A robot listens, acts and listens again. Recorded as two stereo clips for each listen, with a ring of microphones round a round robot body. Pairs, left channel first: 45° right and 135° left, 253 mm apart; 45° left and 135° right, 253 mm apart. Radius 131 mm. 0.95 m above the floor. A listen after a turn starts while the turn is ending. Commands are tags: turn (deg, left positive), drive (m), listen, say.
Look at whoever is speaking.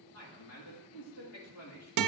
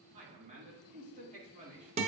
<turn deg="-75"/>
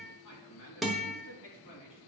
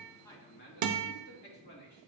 <say>Found it: a man speaking, straight ahead, 2 to 4 m away.</say>